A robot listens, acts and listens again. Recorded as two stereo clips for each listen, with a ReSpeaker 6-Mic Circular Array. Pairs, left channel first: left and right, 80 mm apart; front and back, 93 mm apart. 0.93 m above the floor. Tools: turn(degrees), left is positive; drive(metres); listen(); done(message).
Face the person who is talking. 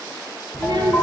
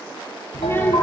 turn(degrees=-65)
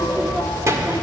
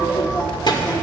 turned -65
turn(degrees=-40)
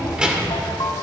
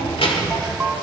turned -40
turn(degrees=-10)
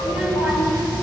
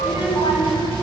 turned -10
turn(degrees=-15)
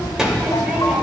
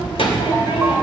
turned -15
turn(degrees=-10)
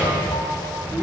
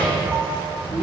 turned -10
done("Found it: a child speaking, straight ahead.")